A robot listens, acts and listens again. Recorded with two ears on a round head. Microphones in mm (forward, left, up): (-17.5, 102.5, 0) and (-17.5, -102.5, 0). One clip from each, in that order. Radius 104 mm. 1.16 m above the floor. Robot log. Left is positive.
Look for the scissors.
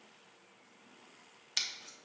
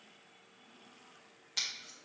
note: The scissors: about 35° left or 145° left.
cmd yaw +35
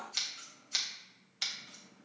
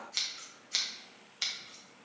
end: Found it: scissors, straight ahead, under 1 m away.